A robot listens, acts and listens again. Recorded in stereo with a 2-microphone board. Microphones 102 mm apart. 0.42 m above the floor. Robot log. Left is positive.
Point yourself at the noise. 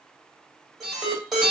cmd yaw +30
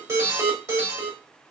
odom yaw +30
note: So it is at 35° right.
cmd yaw -35
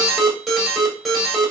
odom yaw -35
end: Facing the alarm.